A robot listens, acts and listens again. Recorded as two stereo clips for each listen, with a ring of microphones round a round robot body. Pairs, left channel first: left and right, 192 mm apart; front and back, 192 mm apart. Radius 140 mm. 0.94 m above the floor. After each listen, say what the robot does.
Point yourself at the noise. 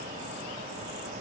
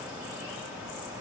Keep listening.
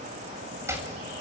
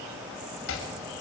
Turn 15° right.
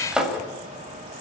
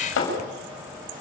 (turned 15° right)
Facing the chopping.